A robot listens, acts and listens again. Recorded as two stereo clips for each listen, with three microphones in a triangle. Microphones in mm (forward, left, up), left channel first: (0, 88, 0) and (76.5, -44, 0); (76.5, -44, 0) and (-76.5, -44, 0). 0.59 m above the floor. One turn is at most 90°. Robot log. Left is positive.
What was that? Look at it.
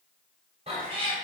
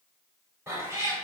note: The cat meowing: 110° right.
cmd yaw -90
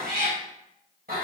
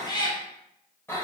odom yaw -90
note: The cat meowing is now 75° right.
cmd yaw -75
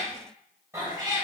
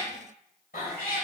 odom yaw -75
end: Found it: a cat meowing, straight ahead.